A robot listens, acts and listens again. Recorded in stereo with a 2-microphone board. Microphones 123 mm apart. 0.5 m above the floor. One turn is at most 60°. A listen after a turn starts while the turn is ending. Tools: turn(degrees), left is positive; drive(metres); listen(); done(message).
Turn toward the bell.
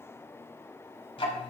listen()
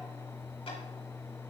listen()
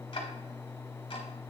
done("I can't make out a bell, only ticking.")